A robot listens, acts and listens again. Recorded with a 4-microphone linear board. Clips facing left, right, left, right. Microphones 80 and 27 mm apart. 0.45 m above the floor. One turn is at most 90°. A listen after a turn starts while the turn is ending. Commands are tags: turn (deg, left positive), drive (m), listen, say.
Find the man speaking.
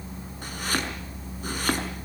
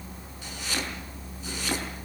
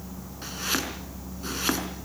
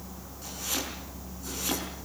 <listen/>
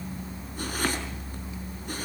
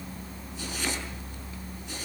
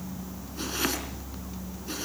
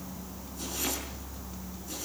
<listen/>
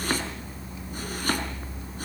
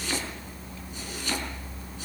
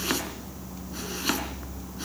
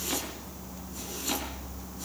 <say>I can't make out a man speaking, only chopping.</say>